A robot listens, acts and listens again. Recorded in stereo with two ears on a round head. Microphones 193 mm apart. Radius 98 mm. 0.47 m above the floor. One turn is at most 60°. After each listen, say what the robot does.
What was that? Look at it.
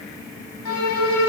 Turn 60° left.
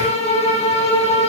Turn 30° left.
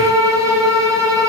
Turn 15° right.
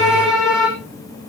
Found it: a violin, straight ahead.